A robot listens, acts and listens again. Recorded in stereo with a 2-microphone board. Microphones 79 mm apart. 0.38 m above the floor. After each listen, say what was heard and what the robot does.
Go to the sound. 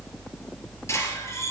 The squeak: about 35° left or 145° left. Turn 35° left.
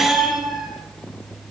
Drive 1.0 m forward.
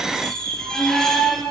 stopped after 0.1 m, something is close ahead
The squeak is now 10° left. Turn 10° left.
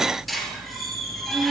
Blocked. The squeak is further on, straight ahead.